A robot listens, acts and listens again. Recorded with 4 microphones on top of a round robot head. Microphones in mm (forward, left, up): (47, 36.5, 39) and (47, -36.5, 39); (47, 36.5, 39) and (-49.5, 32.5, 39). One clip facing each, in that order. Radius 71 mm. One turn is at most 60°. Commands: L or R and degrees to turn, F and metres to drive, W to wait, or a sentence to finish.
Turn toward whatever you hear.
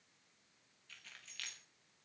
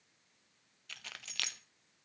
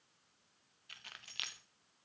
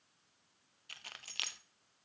R60
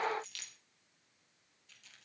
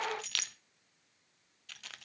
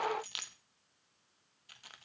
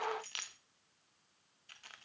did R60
R60
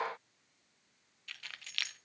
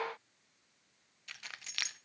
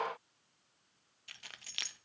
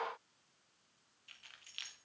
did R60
R20
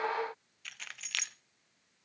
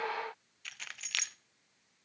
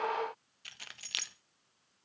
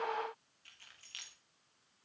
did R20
Found it: keys jangling, straight ahead.